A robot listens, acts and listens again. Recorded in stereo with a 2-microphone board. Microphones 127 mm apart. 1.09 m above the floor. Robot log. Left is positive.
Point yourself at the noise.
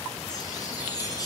note: The chime: about 30° left or 150° left.
cmd yaw +30
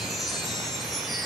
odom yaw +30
end: Found it: a chime, straight ahead, over 4 m away.